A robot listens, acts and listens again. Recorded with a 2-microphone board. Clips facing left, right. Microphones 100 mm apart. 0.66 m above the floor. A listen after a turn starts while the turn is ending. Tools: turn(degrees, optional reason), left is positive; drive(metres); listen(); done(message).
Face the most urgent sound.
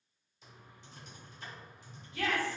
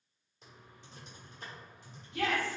turn(degrees=-70, reason="The shout: about 70° right or 110° right.")
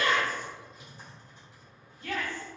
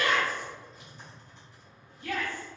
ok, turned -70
turn(degrees=-20, reason="So it is at 20° right.")
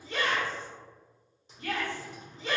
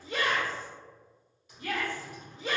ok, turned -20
done("Found it: a shout, straight ahead, 1 to 2 m away.")